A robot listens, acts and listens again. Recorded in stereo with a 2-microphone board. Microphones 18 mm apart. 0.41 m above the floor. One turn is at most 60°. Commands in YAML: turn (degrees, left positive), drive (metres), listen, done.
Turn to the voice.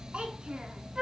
turn: -60
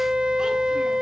turn: -30
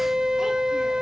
listen: true
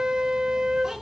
turn: -25
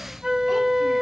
listen: true
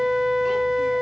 listen: true
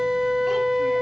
done: "Facing where the child speaking came from. I can't hear it now."